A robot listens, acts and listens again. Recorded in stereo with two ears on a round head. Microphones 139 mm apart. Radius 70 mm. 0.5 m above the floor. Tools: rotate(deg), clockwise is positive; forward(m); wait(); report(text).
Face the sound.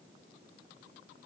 wait()
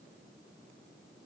wait()
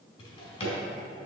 rotate(-35)
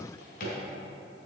rotate(-105)
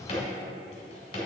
rotate(-40)
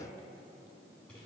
wait()
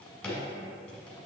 report("Found it: a drawer, straight ahead, 2 to 4 m away.")